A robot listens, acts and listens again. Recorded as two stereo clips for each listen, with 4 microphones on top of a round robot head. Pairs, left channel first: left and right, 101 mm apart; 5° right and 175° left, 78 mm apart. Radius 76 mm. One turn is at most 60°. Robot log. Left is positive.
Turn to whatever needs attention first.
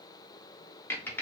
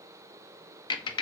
cmd idle
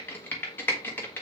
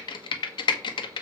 cmd idle
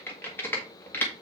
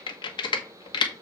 end: I can't make out anything urgent, only typing on a keyboard.